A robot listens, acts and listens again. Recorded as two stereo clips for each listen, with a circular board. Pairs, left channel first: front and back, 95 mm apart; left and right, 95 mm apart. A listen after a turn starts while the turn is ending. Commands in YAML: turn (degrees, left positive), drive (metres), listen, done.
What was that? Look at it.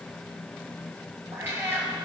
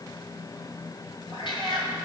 turn: 115
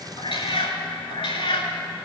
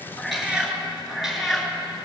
done: "Facing the cat meowing."